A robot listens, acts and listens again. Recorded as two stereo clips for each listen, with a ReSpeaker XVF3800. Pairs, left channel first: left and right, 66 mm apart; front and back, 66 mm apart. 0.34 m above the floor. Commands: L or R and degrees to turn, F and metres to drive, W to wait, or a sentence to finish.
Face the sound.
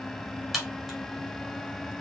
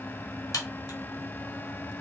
Facing the crack.